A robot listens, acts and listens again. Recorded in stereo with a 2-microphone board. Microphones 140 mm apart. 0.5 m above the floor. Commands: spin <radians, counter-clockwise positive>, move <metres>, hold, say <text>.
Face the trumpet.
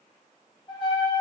spin 0.61
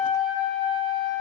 say Facing the trumpet.